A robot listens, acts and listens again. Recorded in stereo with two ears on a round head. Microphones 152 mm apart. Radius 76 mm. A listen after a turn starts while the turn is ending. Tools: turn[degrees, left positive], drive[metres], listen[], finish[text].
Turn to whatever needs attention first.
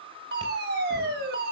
Thought: The fire alarm: about 65° right or 115° right.
Action: turn[-65]
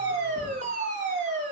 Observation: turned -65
Thought: So it is at 50° right.
Action: turn[-50]
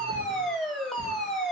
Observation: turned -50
Action: finish[Facing the fire alarm, over 4 m away.]